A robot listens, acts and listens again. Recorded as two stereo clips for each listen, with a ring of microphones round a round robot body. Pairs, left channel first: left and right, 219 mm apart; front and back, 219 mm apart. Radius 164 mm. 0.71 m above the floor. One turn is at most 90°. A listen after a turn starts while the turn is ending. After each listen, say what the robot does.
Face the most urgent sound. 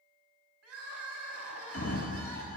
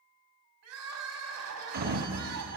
Turn 90° right.
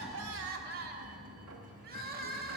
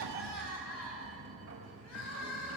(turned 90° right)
Turn 45° right.
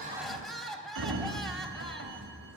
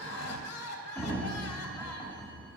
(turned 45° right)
Facing the crying, 1 to 2 m away.